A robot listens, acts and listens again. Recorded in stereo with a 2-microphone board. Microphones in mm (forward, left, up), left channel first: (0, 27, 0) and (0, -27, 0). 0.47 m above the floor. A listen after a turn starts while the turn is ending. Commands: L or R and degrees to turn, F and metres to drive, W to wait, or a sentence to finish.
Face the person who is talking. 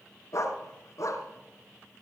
W
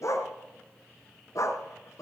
W
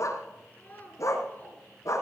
L30
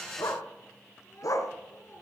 L120
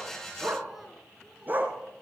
W
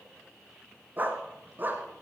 W
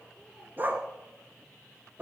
I heard a child speaking from this way, but can't make it out now.